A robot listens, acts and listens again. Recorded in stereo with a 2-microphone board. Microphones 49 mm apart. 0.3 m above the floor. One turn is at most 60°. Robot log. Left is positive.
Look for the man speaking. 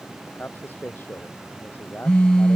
note: The man speaking: about 40° left or 140° left.
cmd yaw +40
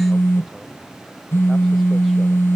cmd idle
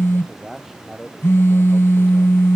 end: Facing the man speaking.